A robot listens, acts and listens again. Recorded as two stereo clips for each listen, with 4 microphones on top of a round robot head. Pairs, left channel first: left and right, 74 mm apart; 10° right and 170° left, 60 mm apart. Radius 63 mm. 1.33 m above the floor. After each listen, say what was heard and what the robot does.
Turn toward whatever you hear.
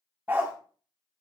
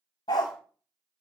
The dog barking: 20° right. Turn 20° right.
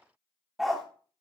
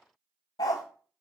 Facing the dog barking.